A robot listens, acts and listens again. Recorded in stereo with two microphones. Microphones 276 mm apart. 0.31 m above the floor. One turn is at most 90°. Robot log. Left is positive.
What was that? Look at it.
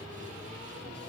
cmd idle
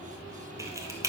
cmd yaw -30
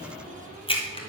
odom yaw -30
note: So it is at 20° left.
cmd yaw +20
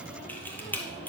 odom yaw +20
end: Found it: a camera shutter, straight ahead, 1 to 2 m away.